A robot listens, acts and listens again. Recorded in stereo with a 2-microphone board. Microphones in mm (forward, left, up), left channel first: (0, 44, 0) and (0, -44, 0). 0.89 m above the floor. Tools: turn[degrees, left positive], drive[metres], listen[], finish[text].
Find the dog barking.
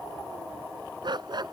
Thought: The dog barking: about 55° right or 125° right.
Action: turn[-55]
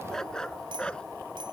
Thought: So it is at 10° left.
Action: turn[10]
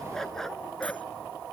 Action: finish[Found it: a dog barking, straight ahead.]